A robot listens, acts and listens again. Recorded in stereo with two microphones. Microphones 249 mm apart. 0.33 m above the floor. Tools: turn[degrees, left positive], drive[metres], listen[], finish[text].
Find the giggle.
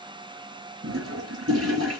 Action: listen[]
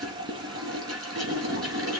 Action: listen[]
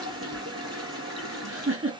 Thought: The giggle: about 55° right or 125° right.
Action: turn[-55]
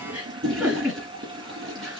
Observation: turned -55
Action: finish[Facing the giggle, 2 to 4 m away.]